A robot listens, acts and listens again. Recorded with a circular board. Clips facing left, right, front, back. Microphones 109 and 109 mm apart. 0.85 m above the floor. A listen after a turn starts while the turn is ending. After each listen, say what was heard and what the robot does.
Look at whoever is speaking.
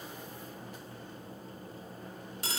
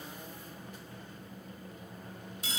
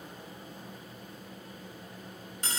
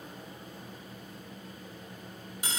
Keep listening.
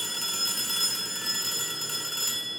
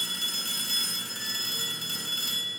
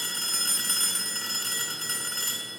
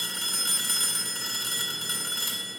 Keep listening.
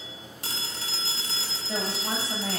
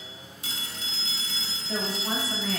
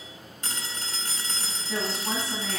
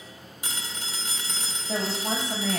The woman speaking: 155° left. Turn 155° left.
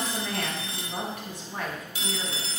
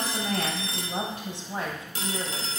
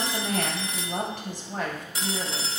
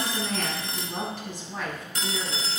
The woman speaking is now 30° right. Turn 30° right.
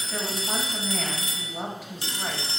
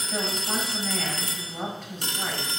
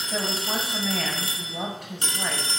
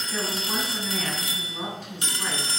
The woman speaking is now 10° left. Turn 10° left.
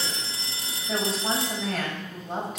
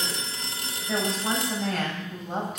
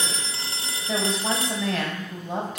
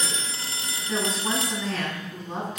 Facing the woman speaking, over 4 m away.